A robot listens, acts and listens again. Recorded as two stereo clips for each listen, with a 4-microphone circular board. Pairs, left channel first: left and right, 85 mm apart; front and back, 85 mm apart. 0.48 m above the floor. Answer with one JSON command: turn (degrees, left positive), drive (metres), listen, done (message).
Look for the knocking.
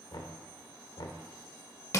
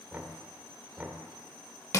{"turn": 110}
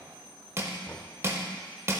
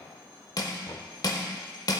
{"turn": 30}
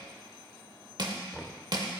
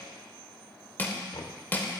{"done": "Found it: knocking, straight ahead."}